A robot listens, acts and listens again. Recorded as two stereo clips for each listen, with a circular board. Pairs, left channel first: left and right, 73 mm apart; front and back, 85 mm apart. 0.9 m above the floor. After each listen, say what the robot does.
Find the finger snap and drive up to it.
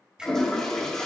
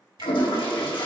Turn 165° right.
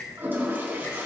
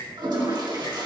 Turn 35° left.
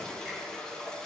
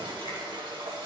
Keep listening.
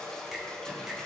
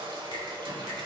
Keep listening.
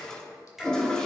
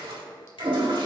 Drive 1.0 m forward.
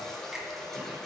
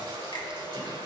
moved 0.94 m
Keep listening.
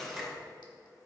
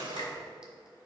Keep listening.
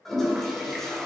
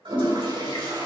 Facing where the finger snap came from. I can't hear it now. I did not reach it.